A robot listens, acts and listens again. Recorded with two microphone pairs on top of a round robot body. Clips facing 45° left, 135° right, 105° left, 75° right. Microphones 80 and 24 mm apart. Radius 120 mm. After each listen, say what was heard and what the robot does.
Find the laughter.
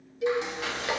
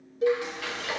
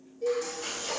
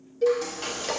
Keep listening.
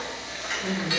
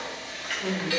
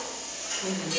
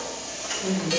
The laughter: 175° left. Turn 175° left.
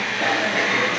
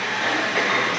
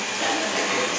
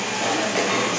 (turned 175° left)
Keep listening.
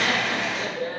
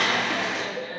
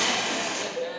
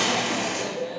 The laughter is now 95° left. Turn 95° left.
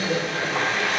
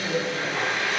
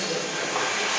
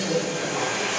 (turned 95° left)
Keep listening.
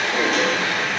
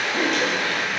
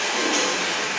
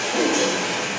Keep listening.
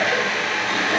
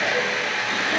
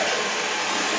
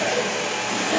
Facing where the laughter came from. I can't hear it now.